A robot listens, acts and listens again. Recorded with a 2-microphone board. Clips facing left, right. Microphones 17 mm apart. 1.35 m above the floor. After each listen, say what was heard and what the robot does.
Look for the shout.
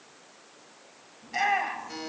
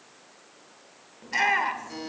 The shout: about 65° right or 115° right. Turn 65° right.
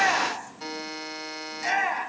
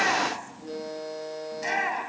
Found it: a shout, straight ahead, over 4 m away.